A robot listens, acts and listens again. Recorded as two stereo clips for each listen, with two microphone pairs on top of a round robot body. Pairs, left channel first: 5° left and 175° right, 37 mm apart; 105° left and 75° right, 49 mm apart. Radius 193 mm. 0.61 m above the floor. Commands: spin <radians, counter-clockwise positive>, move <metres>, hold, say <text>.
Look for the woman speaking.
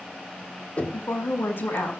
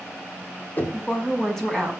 spin 0.44
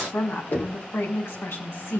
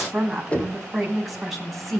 spin 0.26
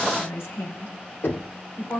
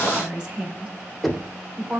say Found it: a woman speaking, straight ahead.